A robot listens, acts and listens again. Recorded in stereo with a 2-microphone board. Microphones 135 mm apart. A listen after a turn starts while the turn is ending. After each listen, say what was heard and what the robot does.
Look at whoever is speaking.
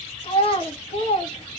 The child speaking: about 45° left or 135° left. Turn 45° left.
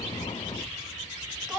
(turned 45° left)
Facing the child speaking.